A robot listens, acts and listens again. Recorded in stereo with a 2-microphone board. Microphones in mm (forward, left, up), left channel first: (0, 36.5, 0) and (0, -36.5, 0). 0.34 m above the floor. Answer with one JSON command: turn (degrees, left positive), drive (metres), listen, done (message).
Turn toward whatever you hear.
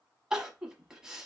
{"turn": -30}
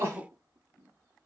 {"turn": -140}
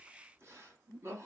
{"turn": -40}
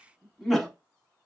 {"done": "Facing the crying."}